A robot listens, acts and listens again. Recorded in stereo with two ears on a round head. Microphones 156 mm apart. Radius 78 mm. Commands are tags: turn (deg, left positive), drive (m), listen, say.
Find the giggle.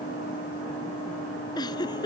<turn deg="25"/>
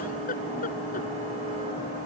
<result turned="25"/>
<listen/>
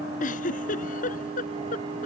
<turn deg="130"/>
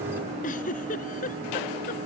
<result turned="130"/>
<turn deg="50"/>
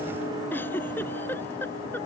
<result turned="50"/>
<turn deg="15"/>
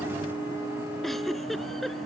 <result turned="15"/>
<say>Found it: a giggle, straight ahead.</say>